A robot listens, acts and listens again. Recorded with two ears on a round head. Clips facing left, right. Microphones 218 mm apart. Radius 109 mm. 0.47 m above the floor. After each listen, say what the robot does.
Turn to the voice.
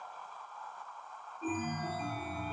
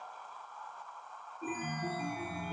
Keep listening.
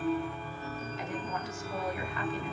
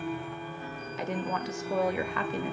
Turn 60° right.
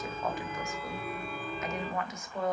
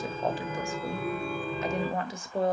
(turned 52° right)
Turn 35° right.
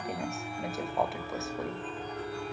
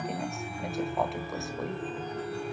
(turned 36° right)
Keep listening.
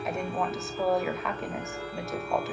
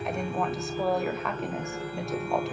Found it: a woman speaking, straight ahead, 1 to 2 m away.